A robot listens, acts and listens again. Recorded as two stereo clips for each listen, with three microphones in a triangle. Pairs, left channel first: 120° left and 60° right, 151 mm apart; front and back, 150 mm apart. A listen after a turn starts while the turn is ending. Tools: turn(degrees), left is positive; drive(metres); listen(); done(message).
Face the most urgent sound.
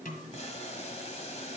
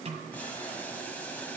listen()
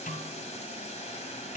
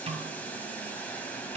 listen()
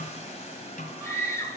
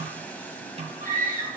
turn(degrees=-170)
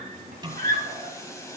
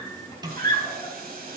turn(degrees=-60)
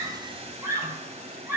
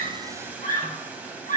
turn(degrees=10)
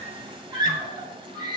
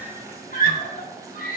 done("Found it: a scream, straight ahead.")